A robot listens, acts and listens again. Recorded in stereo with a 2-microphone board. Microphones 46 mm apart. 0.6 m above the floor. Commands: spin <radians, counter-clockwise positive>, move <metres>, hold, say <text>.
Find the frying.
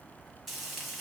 spin -0.52
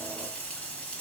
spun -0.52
spin 0.44
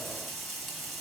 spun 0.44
say Found it: frying, straight ahead.